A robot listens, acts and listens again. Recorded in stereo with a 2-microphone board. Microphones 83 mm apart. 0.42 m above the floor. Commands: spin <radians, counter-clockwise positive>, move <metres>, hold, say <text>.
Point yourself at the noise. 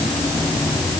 hold
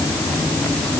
hold
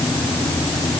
say I can't make out anything.